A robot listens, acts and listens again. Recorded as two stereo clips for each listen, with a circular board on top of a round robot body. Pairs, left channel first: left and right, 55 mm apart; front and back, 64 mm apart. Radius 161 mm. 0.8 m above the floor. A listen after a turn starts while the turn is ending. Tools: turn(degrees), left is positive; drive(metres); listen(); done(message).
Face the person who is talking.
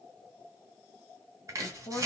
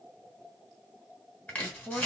turn(degrees=85)
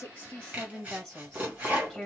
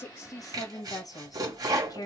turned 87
done("Facing the woman speaking, 1 to 2 m away.")